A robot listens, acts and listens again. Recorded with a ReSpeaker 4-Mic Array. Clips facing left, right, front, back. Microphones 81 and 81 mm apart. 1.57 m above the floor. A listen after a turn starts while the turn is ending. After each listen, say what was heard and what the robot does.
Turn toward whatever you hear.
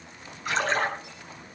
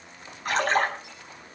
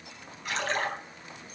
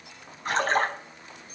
The splash: 130° right. Turn 130° right.
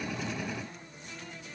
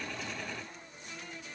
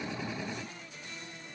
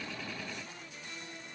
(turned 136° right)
Facing where the splash came from. I can't hear it now.